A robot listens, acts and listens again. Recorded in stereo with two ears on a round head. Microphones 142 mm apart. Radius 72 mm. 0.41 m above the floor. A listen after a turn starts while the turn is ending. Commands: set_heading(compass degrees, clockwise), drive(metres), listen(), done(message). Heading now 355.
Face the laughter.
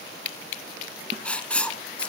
listen()
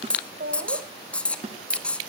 set_heading(60)
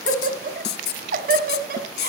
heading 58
set_heading(118)
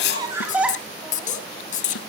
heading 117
set_heading(127)
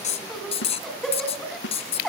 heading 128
done("Found it: laughter, straight ahead.")